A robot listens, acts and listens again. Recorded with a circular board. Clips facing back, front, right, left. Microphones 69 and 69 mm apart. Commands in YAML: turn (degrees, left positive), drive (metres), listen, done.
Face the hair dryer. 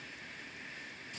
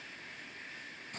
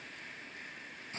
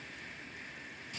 listen: true
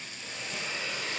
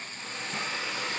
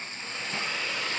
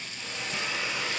turn: 15
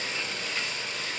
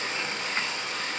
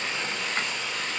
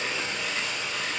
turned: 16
done: "Facing the hair dryer."